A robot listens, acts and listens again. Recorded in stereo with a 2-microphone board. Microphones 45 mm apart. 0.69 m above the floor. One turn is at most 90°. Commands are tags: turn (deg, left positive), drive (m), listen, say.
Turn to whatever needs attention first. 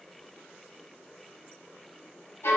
<listen/>
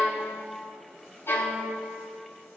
<listen/>
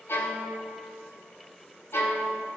<say>I can't make out anything urgent to turn to.</say>